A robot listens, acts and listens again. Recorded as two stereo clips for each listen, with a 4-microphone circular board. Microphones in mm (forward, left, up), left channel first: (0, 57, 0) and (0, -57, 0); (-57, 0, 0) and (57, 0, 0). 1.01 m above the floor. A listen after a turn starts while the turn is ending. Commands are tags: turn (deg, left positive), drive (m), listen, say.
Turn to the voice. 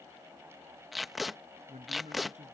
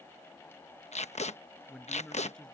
<turn deg="-95"/>
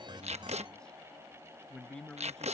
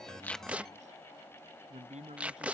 <say>Found it: a man speaking, straight ahead.</say>